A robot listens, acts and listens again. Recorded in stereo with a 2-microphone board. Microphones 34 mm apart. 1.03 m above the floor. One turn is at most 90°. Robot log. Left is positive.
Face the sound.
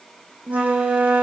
note: The flute: about 45° right or 135° right.
cmd yaw -45
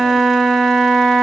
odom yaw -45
end: Found it: a flute, straight ahead.